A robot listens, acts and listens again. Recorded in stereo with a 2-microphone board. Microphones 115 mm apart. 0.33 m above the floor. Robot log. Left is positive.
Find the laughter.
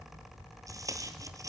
cmd idle
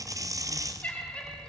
cmd yaw +30
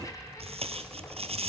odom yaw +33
cmd idle
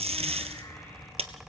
cmd idle
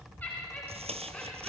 cmd yaw +30
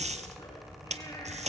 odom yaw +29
cmd idle
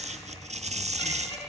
note: So it is at 140° left.
cmd yaw +140
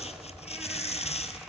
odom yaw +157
note: Nothing new. It was at 15° right.
cmd yaw -15
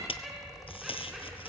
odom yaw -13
end: Found it: laughter, straight ahead, 2 to 4 m away.